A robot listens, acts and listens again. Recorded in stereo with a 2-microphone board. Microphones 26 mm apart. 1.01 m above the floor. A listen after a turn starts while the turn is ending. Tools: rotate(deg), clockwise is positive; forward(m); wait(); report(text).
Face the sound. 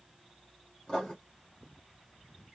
rotate(-30)
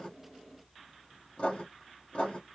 rotate(-115)
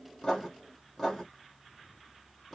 report("Found it: writing, straight ahead, 2 to 4 m away.")